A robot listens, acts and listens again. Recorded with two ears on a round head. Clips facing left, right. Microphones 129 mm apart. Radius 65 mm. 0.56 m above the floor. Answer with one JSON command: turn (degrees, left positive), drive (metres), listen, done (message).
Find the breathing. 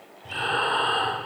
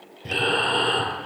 {"turn": -90}
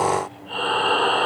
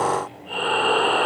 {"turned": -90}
{"turn": -15}
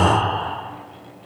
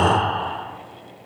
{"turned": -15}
{"done": "Found it: breathing, straight ahead."}